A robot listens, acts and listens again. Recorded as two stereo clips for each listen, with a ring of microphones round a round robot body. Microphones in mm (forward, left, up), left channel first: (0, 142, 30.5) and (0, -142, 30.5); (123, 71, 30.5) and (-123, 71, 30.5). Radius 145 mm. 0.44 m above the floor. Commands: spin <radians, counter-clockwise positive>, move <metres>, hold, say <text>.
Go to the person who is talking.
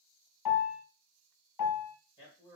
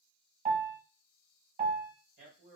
spin 2.88
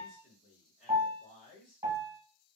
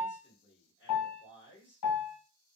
spin 0.61
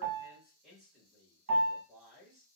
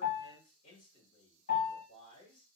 move 1.0
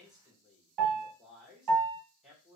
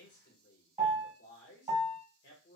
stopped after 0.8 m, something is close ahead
say I am next to the man speaking.